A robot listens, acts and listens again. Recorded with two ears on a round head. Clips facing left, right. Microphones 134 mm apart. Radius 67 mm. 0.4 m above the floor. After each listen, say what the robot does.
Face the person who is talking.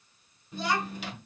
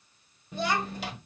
Turn 50° right.
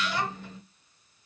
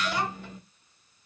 Turn 10° right.
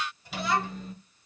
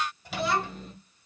Facing the child speaking.